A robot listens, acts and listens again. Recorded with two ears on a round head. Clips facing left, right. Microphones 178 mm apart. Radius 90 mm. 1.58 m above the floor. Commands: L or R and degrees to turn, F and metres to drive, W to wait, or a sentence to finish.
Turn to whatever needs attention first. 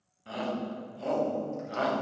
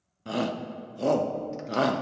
R55
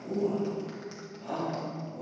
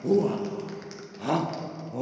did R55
R75
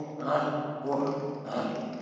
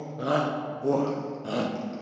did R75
R30
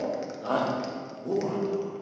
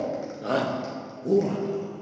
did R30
R25
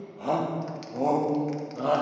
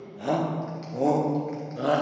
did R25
R10
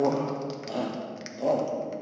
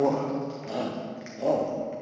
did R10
Facing the shout.